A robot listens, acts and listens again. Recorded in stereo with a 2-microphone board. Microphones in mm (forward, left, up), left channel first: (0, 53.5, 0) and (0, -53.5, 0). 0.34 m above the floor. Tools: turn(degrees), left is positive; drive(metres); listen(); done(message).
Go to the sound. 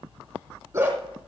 turn(degrees=-30)
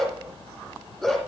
drive(metres=1.0)
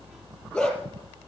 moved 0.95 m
drive(metres=1.0)
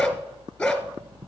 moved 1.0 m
drive(metres=1.0)
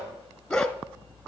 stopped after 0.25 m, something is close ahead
done("I am next to the dog barking.")